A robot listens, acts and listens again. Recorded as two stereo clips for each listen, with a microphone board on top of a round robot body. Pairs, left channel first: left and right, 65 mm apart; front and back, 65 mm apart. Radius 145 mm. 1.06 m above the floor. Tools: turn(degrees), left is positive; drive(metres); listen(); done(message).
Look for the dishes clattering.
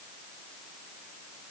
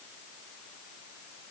listen()
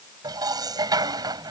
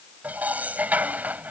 turn(degrees=-110)
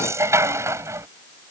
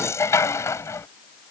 turn(degrees=-45)
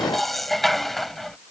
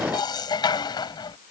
done("Facing the dishes clattering.")